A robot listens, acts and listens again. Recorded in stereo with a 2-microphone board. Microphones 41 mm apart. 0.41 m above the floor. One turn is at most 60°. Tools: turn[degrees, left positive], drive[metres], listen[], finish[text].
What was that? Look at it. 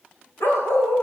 Action: turn[60]
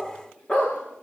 Thought: So it is at 30° left.
Action: turn[30]
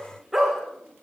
Action: finish[Facing the dog barking, over 4 m away.]